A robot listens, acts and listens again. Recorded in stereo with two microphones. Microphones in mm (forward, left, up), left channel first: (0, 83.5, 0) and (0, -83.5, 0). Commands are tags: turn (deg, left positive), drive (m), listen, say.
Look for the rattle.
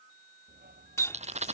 <turn deg="-45"/>
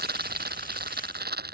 <turn deg="-90"/>
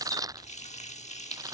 <turn deg="-20"/>
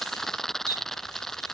<say>Found it: a rattle, straight ahead.</say>